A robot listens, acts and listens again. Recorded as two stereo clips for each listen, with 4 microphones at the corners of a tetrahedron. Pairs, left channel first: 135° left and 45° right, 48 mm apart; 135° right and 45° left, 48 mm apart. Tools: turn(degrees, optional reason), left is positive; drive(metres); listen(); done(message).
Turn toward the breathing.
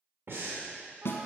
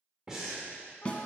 turn(degrees=-30, reason="The breathing: 30° right.")
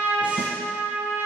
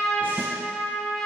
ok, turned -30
listen()
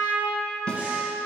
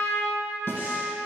listen()
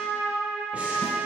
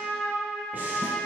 done("I heard breathing from this way, but can't make it out now.")